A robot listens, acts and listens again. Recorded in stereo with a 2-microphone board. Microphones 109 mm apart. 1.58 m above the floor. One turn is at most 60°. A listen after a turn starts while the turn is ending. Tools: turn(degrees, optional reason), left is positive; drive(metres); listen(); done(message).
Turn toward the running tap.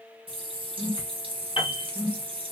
turn(degrees=-55, reason="The running tap: about 55° right or 125° right.")
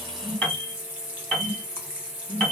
turn(degrees=-15, reason="So it is at 15° right.")
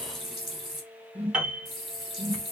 done("Found it: a running tap, straight ahead, 1 to 2 m away.")